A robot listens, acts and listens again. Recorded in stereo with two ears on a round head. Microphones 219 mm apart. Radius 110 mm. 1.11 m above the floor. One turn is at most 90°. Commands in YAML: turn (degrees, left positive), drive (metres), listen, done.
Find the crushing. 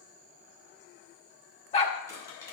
turn: 30
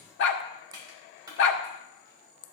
turn: -15
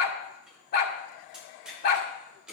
done: "Facing the crushing, 2 to 4 m away."